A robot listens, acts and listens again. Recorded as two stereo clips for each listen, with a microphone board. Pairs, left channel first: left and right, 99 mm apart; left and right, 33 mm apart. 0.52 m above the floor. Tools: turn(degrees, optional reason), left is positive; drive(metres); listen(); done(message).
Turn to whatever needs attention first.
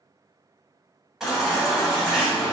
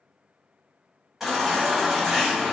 turn(degrees=-30)
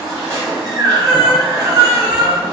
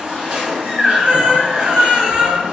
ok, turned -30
turn(degrees=-150, reason="So it is at 150° right.")
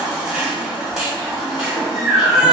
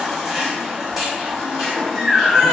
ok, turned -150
turn(degrees=-10, reason="The baby crying is now 10° right.")
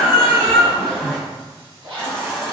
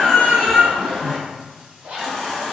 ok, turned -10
done("Found it: a baby crying, straight ahead.")